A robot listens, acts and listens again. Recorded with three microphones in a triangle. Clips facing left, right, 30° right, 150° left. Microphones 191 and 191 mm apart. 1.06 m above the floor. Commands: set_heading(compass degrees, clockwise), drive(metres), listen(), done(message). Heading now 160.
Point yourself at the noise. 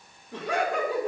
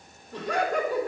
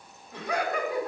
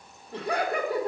set_heading(70)
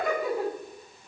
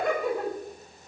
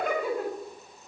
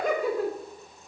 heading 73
done("Found it: laughter, straight ahead.")